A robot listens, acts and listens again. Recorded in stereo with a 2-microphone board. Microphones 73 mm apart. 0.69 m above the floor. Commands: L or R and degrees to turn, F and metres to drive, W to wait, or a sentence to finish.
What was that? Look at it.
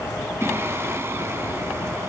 R35
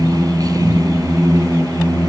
R105
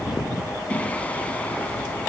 L20
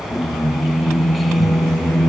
Found it: singing, straight ahead.